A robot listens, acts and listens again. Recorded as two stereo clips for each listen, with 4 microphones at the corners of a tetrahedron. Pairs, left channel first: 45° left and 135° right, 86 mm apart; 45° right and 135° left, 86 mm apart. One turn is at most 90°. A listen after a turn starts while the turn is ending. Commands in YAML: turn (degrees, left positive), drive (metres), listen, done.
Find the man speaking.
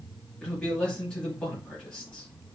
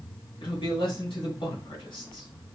turn: -30
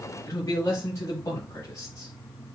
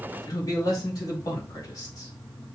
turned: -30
done: "Facing the man speaking, 2 to 4 m away."